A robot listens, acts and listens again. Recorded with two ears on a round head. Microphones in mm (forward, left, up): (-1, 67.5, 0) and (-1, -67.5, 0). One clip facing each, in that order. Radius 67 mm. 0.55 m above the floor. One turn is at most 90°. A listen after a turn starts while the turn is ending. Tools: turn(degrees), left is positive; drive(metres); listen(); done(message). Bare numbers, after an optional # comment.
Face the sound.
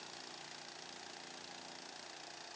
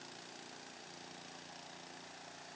listen()
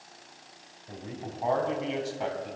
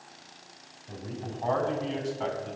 turn(30)
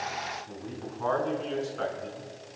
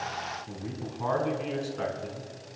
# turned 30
# So it is at 20° right.
turn(-20)
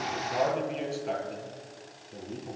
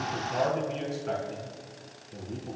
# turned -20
done("Found it: a man speaking, straight ahead.")